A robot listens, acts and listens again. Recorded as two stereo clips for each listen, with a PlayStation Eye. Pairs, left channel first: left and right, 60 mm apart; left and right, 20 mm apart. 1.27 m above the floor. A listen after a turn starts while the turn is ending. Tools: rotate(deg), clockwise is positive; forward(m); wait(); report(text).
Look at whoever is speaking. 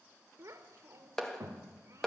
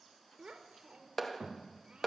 rotate(55)
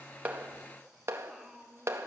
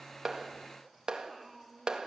report("Facing the child speaking, 2 to 4 m away.")